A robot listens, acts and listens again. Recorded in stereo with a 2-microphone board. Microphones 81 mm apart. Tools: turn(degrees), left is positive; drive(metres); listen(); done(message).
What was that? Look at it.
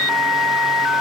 listen()
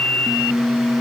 listen()
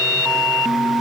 done("I can't make out anything.")